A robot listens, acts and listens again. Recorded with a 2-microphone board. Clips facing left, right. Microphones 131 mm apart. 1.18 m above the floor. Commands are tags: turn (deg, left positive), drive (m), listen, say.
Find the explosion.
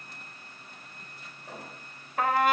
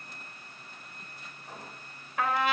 <turn deg="75"/>
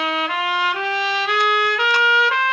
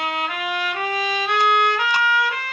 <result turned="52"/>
<listen/>
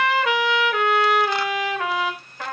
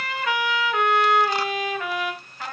<say>I heard an explosion, but can't make it out now. It was about 20° left or 55° left.</say>